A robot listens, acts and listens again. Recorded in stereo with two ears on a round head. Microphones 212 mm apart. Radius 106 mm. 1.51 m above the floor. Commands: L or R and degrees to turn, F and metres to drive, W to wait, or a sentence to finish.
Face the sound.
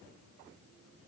W
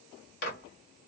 L45
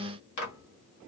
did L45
L90
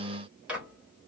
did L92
Found it: a microwave, straight ahead.